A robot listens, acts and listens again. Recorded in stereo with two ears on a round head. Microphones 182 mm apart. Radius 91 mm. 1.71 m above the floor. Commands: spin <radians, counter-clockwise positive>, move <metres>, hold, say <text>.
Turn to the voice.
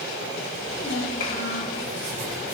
spin 1.05
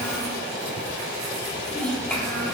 say Facing the child speaking, over 4 m away.